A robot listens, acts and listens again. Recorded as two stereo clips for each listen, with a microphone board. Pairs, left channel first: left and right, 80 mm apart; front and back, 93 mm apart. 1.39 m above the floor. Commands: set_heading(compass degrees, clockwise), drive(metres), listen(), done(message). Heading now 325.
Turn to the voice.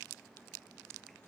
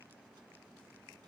listen()
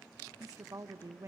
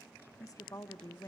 set_heading(15)
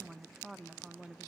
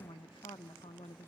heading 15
done("Facing the woman speaking, 1 to 2 m away.")